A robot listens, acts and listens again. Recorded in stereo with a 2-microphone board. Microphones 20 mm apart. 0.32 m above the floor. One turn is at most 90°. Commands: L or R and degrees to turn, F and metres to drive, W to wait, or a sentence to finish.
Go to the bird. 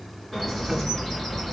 L15
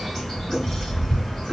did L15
L90
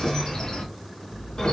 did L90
L60
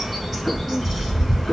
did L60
R20
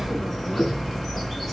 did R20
F1.0
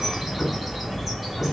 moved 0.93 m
R10
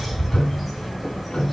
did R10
F1.0
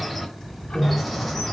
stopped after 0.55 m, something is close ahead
L10
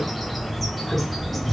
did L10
Arrived at the bird, straight ahead.